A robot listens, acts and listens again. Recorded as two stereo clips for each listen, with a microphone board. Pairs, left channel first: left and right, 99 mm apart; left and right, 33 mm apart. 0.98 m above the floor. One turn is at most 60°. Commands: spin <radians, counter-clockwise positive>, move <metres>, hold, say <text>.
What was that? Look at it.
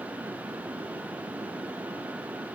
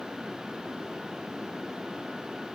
hold
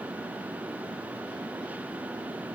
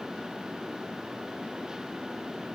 hold
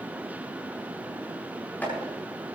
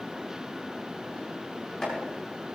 spin 0.26
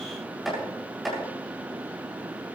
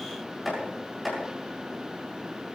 say Found it: chopping, straight ahead, over 4 m away.